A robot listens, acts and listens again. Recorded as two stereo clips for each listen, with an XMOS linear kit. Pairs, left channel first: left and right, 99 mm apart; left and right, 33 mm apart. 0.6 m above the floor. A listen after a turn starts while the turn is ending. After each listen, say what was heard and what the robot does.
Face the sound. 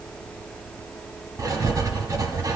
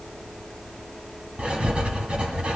The writing: about 40° right or 140° right. Turn 40° right.
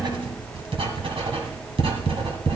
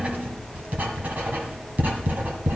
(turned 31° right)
So it is at 110° right. Turn 110° right.
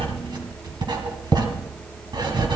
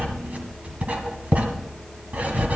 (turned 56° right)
The writing is now 50° right. Turn 50° right.
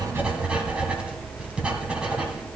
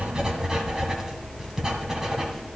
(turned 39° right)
The writing is now 10° right. Turn 10° right.
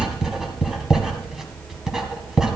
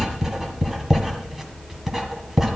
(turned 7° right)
Found it: writing, straight ahead.